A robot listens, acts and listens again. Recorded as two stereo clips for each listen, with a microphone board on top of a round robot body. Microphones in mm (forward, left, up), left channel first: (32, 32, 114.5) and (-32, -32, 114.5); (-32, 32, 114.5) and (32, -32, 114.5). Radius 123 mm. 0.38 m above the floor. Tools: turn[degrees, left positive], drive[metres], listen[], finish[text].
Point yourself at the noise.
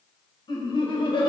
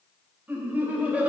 Thought: The laughter: 30° left.
Action: turn[30]
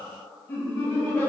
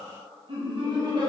Thought: The laughter is now 20° right.
Action: turn[-20]
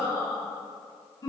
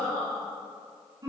Action: finish[Found it: laughter, straight ahead, 2 to 4 m away.]